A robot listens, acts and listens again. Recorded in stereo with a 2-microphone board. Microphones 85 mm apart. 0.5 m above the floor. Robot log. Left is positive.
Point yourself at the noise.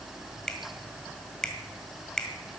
cmd yaw +30
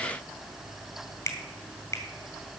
note: So it is at 140° left.
cmd yaw +140
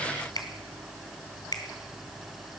note: The finger snap is now 50° left.
cmd yaw +50
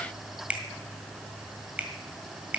note: The finger snap is now 15° right.
cmd yaw -15
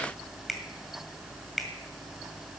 end: Found it: a finger snap, straight ahead, 1 to 2 m away.